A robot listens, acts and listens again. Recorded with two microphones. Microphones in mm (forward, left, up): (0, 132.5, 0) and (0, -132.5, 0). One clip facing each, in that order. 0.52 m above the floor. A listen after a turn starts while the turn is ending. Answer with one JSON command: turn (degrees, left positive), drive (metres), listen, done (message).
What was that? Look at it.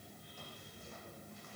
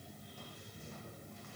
{"listen": true}
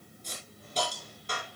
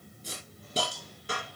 {"turn": -30}
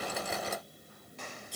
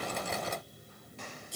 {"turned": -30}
{"done": "Found it: a hiss, straight ahead, over 4 m away."}